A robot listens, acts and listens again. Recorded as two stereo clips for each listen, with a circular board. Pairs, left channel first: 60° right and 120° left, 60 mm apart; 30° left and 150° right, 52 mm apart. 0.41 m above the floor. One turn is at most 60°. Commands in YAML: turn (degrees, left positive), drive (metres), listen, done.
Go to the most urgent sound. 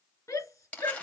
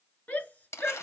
turn: -25
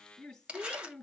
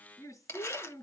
turn: 20
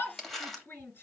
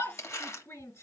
drive: 1.0
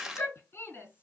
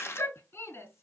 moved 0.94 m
drive: 1.0
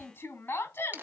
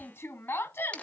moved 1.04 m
turn: -10
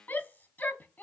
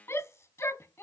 drive: 1.0
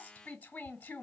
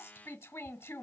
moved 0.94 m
drive: 1.0
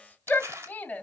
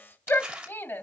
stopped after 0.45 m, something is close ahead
done: "I am next to the shout."